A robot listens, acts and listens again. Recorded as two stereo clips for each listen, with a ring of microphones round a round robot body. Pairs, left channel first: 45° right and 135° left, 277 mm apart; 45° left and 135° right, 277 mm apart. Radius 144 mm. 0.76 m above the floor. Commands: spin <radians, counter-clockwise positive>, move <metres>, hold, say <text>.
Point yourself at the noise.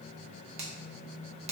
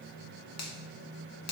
spin 1.22
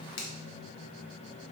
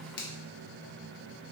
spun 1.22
say Facing the finger snap, under 1 m away.